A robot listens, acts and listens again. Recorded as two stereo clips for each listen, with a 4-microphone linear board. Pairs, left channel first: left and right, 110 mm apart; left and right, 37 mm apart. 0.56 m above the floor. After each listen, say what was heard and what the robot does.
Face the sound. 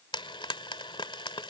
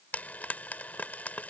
The frying: about 50° left or 130° left. Turn 50° left.
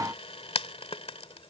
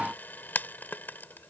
So it is at 75° left. Turn 75° left.
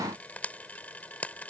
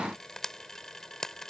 The frying is now 15° left. Turn 15° left.
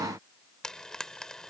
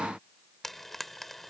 Facing the frying.